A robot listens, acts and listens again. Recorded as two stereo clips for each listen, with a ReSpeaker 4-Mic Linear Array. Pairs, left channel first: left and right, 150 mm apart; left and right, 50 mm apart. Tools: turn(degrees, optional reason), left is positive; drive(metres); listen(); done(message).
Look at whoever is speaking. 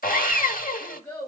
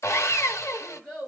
turn(degrees=30)
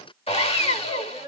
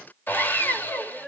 turn(degrees=140, reason="So it is at 140° left.")
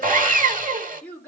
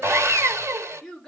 turn(degrees=10, reason="The child speaking is now 10° left.")
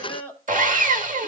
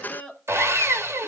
turn(degrees=10, reason="The child speaking is now 10° left.")
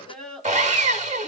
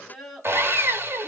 done("Found it: a child speaking, straight ahead.")